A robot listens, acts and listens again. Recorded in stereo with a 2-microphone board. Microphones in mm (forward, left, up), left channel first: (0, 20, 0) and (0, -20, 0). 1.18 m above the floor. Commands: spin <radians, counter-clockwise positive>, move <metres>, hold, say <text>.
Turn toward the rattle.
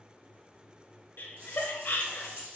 spin -1.13
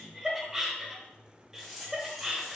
say Facing the rattle.